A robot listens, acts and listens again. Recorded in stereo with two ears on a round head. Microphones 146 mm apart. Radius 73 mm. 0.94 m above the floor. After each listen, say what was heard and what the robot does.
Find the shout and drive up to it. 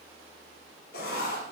Keep listening.
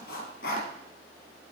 Keep listening.
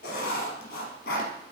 I can't make out a shout, only writing.